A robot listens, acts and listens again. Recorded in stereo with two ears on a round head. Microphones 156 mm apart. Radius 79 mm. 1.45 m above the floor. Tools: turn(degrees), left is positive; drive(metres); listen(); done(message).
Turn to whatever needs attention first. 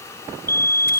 turn(degrees=15)
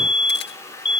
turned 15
turn(degrees=145)
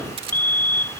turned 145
turn(degrees=10)
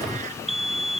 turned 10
done("Found it: a fire alarm, straight ahead.")